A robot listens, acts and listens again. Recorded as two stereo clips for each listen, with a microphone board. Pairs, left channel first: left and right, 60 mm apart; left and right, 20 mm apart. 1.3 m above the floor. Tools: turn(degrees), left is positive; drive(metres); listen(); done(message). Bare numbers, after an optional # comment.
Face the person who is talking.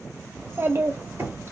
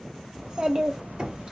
# The child speaking: about 45° right or 135° right.
turn(-45)
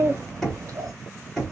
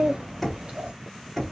# So it is at 85° right.
turn(-85)
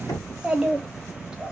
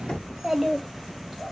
# The child speaking is now 15° right.
turn(-15)
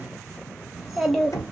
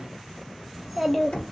done("Facing the child speaking, 1 to 2 m away.")